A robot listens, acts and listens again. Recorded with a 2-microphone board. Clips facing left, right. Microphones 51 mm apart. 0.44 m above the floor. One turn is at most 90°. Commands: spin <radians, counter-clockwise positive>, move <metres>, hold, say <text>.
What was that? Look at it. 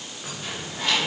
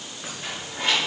spin -0.44
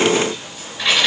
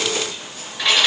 say Found it: keys jangling, straight ahead.